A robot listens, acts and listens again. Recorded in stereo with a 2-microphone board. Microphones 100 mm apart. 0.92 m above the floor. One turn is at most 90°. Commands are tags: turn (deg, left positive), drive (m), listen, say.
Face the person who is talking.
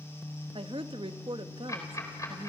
<turn deg="-65"/>
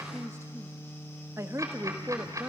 <turn deg="-35"/>
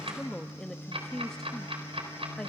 <say>Found it: a woman speaking, straight ahead, 1 to 2 m away.</say>